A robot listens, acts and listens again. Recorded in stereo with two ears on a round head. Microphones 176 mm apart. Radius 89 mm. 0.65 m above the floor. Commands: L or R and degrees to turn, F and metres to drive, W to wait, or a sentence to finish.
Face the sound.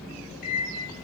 L50
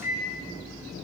L65
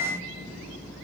L15
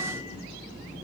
W
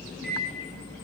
Found it: a microwave, straight ahead, under 1 m away.